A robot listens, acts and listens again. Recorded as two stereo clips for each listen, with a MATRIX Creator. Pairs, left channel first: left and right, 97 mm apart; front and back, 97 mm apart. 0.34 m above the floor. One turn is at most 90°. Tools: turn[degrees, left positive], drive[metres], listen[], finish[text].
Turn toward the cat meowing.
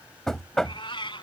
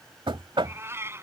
Thought: The cat meowing: 115° left.
Action: turn[90]
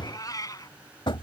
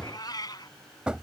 Thought: The cat meowing is now 45° left.
Action: turn[45]
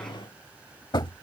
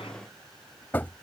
Action: listen[]
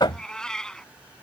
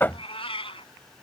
Thought: The cat meowing is now 10° left.
Action: turn[10]
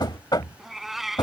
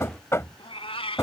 Action: finish[Found it: a cat meowing, straight ahead.]